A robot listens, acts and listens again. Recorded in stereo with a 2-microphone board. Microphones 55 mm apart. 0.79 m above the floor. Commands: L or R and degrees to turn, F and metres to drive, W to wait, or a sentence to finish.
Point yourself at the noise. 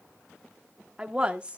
R25
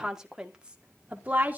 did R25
R30
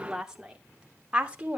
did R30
R25
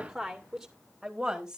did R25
R30
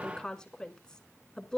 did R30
L15
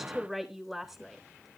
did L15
Facing the woman speaking, 2 to 4 m away.